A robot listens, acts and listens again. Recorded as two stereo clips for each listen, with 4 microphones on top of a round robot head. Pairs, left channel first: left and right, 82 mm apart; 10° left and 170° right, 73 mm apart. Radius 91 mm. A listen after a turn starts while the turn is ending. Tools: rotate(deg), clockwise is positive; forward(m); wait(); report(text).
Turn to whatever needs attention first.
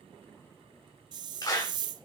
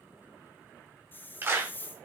wait()
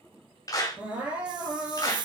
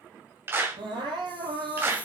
rotate(165)
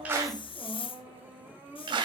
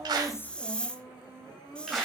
rotate(25)
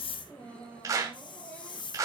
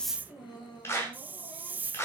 rotate(-15)
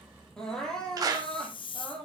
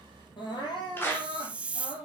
rotate(-10)
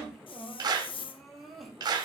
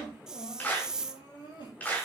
report("Found it: crying, straight ahead.")